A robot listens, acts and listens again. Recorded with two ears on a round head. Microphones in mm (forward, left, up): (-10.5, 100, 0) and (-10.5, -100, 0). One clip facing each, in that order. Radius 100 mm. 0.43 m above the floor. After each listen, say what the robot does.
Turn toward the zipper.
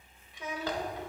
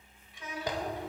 Turn 15° right.
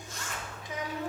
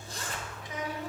Turn 150° right.
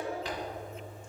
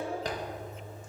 Turn 40° right.
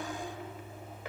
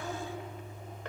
Keep listening.
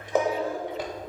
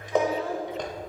Found it: a zipper, straight ahead, under 1 m away.